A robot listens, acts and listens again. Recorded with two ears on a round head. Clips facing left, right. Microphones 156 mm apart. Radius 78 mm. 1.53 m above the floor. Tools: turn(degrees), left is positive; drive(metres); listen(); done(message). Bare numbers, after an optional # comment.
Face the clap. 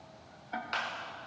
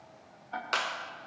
# The clap: about 65° right or 115° right.
turn(-65)
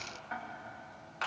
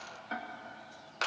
# So it is at 50° right.
turn(-50)
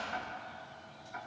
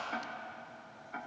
# The clap is now 15° left.
turn(15)
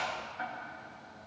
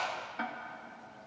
done("Facing the clap, 1 to 2 m away.")